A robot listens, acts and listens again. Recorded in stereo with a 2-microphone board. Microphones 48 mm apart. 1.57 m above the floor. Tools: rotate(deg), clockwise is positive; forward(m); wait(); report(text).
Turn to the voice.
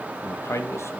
rotate(-65)
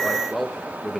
report("Found it: a man speaking, straight ahead, 2 to 4 m away.")